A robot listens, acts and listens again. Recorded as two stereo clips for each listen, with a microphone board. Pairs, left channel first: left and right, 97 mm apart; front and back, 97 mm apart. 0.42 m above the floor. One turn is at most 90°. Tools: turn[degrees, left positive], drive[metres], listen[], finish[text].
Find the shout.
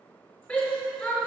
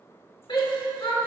Thought: The shout: 15° left.
Action: turn[15]
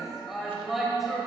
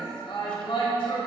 Action: finish[Facing the shout, 1 to 2 m away.]